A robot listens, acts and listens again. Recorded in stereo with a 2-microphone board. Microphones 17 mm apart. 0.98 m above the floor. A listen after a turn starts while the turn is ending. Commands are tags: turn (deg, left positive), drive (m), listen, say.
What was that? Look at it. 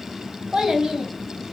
<turn deg="-70"/>
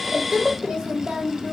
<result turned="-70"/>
<turn deg="-65"/>
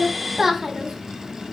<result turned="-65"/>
<turn deg="-25"/>
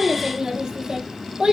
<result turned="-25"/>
<turn deg="-55"/>
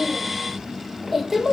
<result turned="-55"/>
<say>Found it: a child speaking, straight ahead, 1 to 2 m away.</say>